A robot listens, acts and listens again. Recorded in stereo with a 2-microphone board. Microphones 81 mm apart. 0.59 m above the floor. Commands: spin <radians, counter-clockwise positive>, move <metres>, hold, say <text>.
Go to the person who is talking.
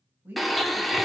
spin -0.44
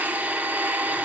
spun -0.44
hold
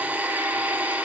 hold
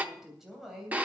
move 1.0
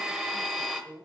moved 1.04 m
move 1.0
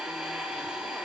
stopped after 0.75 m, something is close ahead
hold
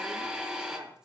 hold
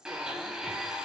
spin -0.17
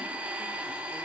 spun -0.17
hold
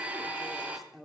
say Arrived at the woman speaking, straight ahead.